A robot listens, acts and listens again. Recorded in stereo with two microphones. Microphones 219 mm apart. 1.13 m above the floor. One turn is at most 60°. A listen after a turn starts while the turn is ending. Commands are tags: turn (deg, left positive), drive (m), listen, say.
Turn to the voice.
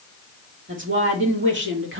<turn deg="-60"/>
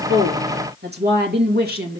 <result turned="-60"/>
<turn deg="-45"/>
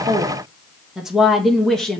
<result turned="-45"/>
<say>Found it: a woman speaking, straight ahead, 1 to 2 m away.</say>